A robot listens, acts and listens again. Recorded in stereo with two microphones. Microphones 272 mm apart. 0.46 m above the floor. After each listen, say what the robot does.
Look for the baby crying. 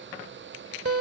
Keep listening.
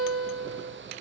Keep listening.
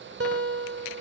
I can't make out a baby crying to turn to.